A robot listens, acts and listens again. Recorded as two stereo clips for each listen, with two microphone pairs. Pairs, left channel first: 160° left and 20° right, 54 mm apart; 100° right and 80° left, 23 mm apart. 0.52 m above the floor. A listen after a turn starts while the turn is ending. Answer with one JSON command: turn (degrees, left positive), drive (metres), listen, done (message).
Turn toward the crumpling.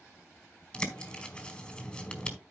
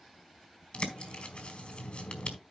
{"listen": true}
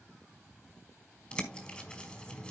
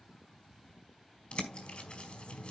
{"listen": true}
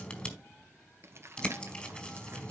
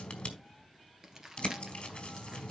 {"turn": 15}
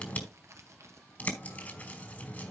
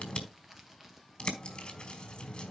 {"done": "Found it: crumpling, straight ahead."}